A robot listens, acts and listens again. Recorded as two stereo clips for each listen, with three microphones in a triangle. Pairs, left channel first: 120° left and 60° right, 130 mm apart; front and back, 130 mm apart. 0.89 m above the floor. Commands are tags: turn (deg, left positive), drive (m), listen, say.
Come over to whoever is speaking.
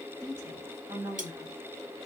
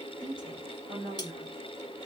<turn deg="-130"/>
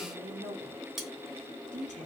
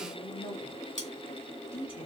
<turn deg="-45"/>
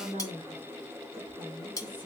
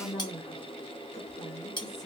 <turn deg="-15"/>
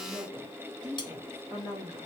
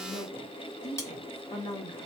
<drive m="1.0"/>
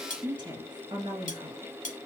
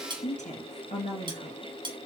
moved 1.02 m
<turn deg="-10"/>
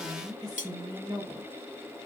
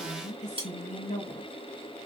<drive m="1.0"/>
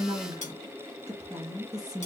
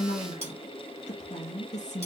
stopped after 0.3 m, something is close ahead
<say>Arrived at the woman speaking, straight ahead.</say>